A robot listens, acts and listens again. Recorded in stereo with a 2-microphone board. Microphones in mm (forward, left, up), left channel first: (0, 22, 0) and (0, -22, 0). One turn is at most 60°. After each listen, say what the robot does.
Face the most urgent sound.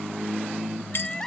Turn 30° left.
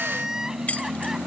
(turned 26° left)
Turn 15° right.
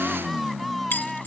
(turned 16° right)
Facing the crying.